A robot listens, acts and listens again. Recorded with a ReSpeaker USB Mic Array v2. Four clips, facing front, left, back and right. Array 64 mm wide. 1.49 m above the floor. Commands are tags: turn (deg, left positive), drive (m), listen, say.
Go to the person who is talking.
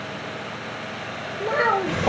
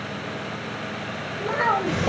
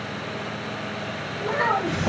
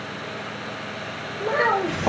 <turn deg="-40"/>
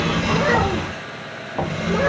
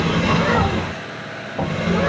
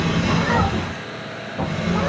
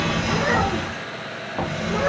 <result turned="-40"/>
<listen/>
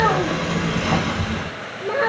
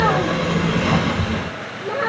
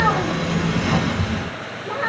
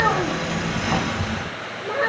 <turn deg="10"/>
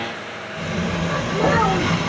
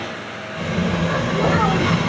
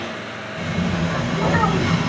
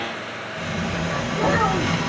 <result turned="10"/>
<listen/>
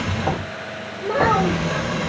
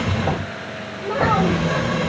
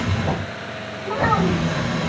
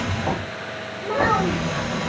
<drive m="1.0"/>
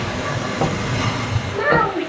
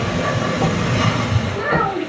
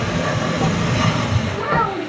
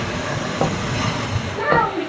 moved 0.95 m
<turn deg="10"/>
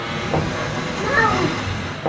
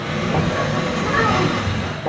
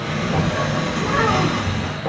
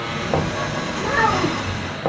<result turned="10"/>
<listen/>
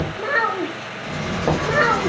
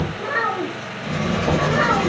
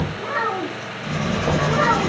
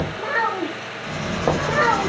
<drive m="1.0"/>
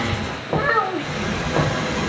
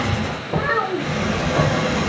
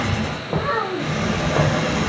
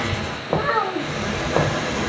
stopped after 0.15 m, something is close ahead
<say>Arrived at the child speaking, straight ahead.</say>